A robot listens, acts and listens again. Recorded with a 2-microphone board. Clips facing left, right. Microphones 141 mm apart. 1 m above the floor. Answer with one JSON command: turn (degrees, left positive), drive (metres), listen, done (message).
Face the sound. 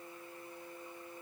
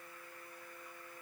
{"listen": true}
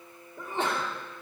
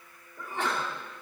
{"turn": 25}
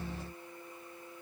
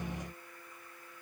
{"listen": true}
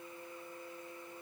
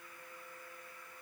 {"done": "I heard a sneeze, but can't make it out now. It was about straight ahead or 130° left."}